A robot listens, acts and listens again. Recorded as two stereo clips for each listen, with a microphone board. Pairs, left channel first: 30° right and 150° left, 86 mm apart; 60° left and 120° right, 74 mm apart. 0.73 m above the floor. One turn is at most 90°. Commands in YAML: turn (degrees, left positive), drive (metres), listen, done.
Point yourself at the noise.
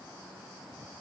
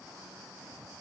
listen: true
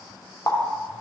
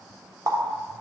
turn: -80
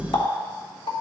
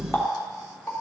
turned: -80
done: "Found it: a running tap, straight ahead."